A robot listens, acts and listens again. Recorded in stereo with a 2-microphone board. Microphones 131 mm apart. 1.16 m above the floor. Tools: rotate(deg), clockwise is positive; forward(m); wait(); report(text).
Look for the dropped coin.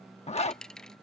rotate(-30)
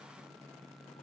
wait()
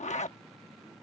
report("I heard a dropped coin, but can't make it out now. It was about 25° right or 145° left.")